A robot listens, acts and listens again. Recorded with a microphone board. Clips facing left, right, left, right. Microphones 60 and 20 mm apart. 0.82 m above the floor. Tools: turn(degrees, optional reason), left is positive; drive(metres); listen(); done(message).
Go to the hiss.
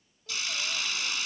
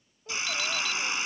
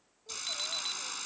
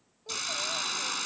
turn(degrees=-30, reason="The hiss: about 30° right or 150° right.")
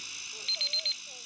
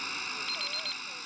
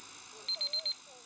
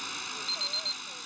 turn(degrees=-125, reason="So it is at 125° right.")
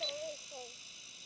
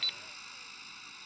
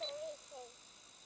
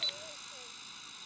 turn(degrees=-50, reason="The hiss is now 50° right.")
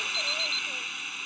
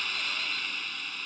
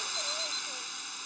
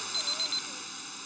drive(metres=1.0)
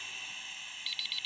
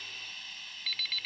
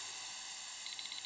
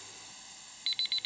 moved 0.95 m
turn(degrees=10, reason="The hiss is now 10° left.")
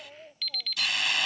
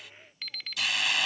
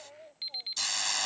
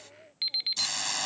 drive(metres=1.0)
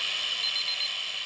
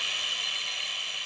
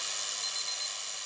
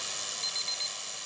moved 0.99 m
drive(metres=1.0)
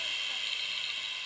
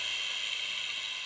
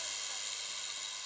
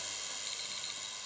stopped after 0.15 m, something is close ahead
done("I am next to the hiss.")